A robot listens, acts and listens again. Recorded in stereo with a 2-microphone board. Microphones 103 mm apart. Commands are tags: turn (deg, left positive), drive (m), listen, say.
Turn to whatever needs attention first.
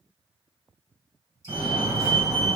<turn deg="-65"/>
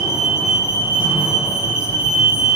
<turn deg="-25"/>
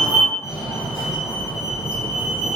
<say>Facing the fire alarm, 1 to 2 m away.</say>